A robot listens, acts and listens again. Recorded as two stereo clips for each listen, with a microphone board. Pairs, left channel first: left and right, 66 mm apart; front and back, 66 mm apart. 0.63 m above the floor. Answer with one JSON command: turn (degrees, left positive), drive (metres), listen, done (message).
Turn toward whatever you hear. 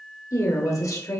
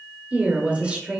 {"turn": 105}
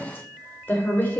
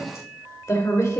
{"turn": 30}
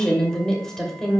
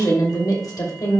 {"done": "Found it: a woman speaking, straight ahead, 2 to 4 m away."}